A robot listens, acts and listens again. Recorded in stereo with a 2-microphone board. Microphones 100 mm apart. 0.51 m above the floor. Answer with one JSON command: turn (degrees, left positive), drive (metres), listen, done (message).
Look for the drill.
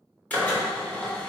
{"turn": 30}
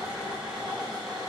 {"turn": -10}
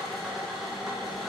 {"done": "Facing the drill, under 1 m away."}